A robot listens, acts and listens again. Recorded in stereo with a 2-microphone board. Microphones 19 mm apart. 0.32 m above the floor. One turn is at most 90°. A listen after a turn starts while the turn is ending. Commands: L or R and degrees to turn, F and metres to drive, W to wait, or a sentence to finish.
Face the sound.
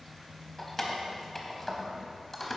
L30
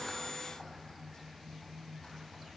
W
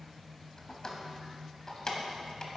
L90
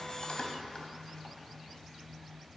L45
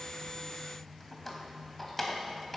L20
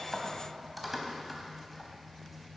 Found it: keys jangling, straight ahead.